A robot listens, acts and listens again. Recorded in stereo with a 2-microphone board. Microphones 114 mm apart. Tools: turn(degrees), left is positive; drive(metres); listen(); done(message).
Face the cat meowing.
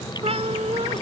turn(degrees=-60)
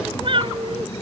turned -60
turn(degrees=-50)
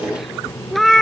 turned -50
done("Found it: a cat meowing, straight ahead.")